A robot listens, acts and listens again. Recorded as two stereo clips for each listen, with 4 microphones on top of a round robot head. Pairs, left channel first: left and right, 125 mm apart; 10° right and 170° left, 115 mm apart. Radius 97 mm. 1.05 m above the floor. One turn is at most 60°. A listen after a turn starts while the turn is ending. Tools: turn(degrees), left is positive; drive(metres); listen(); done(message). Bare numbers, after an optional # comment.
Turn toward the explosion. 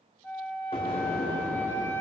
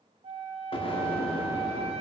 # The explosion: 30° left.
turn(30)
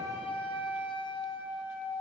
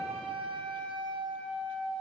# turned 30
done("Facing where the explosion came from. I can't hear it now.")